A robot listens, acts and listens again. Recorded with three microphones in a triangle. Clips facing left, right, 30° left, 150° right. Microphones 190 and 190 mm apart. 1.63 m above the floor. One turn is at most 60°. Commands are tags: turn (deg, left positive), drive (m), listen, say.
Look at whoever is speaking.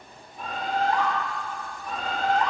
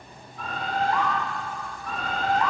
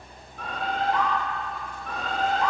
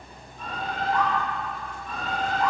<listen/>
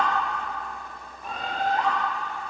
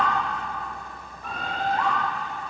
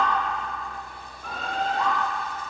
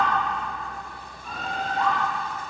<listen/>
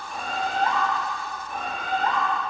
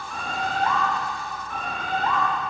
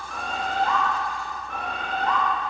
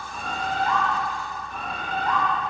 <say>I can't make out anyone speaking, only a bird.</say>